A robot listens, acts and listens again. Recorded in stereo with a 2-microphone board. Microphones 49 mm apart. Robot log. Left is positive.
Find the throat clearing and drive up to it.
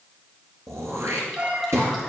cmd yaw -90
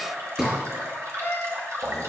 note: So it is at 10° right.
cmd yaw -10
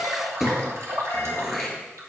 cmd fwd 1.0
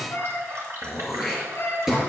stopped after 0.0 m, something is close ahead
end: Something is in my way. I am facing the throat clearing but have not reached it.